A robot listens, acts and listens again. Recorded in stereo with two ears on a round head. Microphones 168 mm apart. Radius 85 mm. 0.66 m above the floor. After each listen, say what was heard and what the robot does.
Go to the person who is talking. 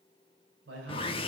The man speaking: about 75° right or 105° right. Turn 75° right.
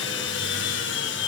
Keep listening.
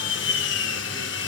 Keep listening.
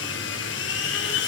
I heard a man speaking, but can't make it out now. It was about straight ahead or 30° right. I did not reach it.